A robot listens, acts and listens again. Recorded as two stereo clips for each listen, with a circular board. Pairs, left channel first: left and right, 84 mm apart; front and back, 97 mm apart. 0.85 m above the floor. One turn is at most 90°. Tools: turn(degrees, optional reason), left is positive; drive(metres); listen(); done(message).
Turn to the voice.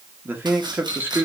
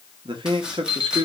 turn(degrees=-90, reason="The man speaking: 155° right.")
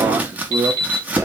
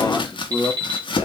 turn(degrees=-75, reason="The man speaking is now 75° right.")
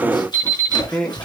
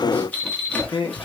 turn(degrees=15, reason="The man speaking is now 15° left.")
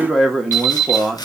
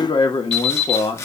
done("Facing the man speaking.")